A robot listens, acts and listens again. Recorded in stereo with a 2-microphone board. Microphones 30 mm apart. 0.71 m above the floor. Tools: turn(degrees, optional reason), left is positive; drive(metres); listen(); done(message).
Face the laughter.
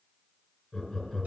turn(degrees=30)
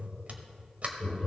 turn(degrees=135, reason="So it is at 135° left.")
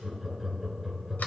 done("Found it: laughter, straight ahead.")